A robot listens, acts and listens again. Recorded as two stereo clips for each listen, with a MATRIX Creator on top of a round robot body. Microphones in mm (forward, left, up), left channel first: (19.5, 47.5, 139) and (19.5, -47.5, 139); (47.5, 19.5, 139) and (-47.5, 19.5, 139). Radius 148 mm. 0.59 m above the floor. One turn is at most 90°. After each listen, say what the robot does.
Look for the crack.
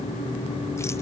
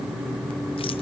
Keep listening.
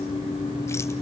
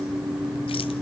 Keep listening.
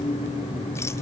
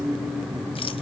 I can't make out a crack to turn to.